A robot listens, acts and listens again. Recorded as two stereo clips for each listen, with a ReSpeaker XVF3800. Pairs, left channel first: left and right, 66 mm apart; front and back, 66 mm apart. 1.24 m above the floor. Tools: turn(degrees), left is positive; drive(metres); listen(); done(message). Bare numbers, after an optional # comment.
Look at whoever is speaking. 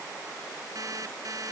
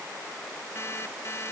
listen()
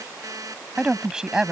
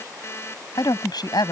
# The woman speaking: 10° right.
turn(-10)
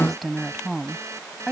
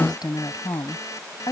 done("Found it: a woman speaking, straight ahead.")